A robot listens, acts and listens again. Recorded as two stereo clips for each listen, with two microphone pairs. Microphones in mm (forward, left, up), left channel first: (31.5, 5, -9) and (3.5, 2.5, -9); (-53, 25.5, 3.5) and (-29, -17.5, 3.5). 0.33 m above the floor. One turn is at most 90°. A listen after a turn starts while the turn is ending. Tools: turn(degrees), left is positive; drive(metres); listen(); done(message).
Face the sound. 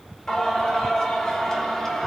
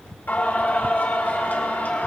turn(degrees=75)
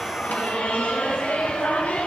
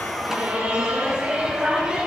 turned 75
turn(degrees=10)
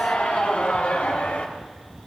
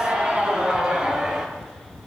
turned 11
turn(degrees=10)
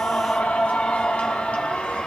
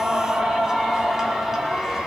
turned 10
turn(degrees=20)
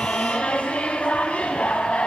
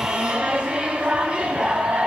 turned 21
done("Facing the singing.")